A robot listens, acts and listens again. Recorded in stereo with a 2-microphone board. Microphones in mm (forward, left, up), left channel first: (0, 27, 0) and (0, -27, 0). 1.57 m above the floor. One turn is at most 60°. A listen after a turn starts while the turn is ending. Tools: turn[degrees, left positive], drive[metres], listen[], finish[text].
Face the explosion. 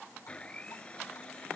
Action: listen[]
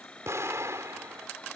Thought: The explosion: about 60° right or 120° right.
Action: turn[-60]
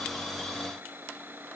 Action: listen[]
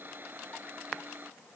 Action: finish[I heard an explosion, but can't make it out now. It was about straight ahead or 60° right.]